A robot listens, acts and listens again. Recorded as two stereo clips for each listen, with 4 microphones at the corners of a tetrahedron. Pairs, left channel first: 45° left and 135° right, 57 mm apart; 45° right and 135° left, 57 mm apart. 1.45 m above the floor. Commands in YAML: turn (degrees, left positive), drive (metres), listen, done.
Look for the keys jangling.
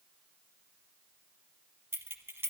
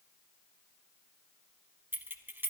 turn: 180
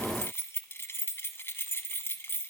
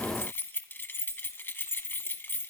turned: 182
done: "Facing the keys jangling, under 1 m away."